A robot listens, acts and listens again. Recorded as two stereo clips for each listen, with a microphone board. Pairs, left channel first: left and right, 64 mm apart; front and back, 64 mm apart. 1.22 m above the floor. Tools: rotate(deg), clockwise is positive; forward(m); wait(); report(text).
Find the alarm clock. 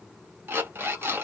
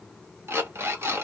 rotate(140)
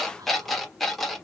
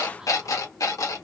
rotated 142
report("Found it: an alarm clock, straight ahead, under 1 m away.")